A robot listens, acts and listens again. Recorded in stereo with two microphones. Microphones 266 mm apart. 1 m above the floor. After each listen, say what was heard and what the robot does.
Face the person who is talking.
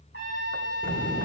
The child speaking: about 30° left or 150° left. Turn 30° left.
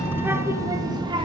So it is at 20° right. Turn 20° right.
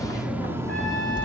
The child speaking is now 20° right. Turn 20° right.
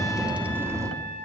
The child speaking is now 10° right. Turn 10° right.
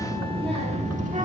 The child speaking is now 30° right. Turn 30° right.
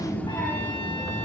Found it: a child speaking, straight ahead.